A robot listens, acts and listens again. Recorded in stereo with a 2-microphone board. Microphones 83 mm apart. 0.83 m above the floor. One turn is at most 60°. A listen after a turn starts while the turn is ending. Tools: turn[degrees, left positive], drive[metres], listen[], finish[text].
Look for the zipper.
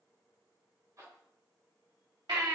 Thought: The zipper: about 45° right or 135° right.
Action: turn[-45]
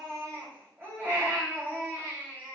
Action: listen[]
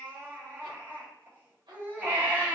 Action: listen[]
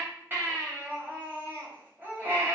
Action: finish[I heard a zipper, but can't make it out now. It was about straight ahead or 90° right.]